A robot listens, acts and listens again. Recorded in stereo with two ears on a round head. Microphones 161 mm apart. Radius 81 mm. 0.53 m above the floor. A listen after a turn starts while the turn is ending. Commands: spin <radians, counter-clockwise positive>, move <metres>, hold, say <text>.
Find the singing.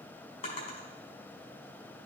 hold
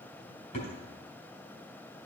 hold
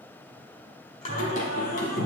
spin 0.87
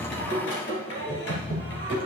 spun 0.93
spin 1.13
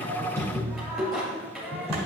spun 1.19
say Facing the singing.